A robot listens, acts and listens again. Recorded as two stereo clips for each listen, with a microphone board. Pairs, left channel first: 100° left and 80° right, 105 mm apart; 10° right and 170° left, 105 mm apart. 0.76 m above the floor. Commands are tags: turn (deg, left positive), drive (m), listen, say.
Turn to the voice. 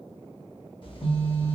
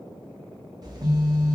<listen/>
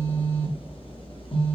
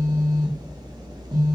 <listen/>
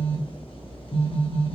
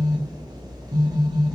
<say>I can't make out anyone speaking, only a phone buzzing.</say>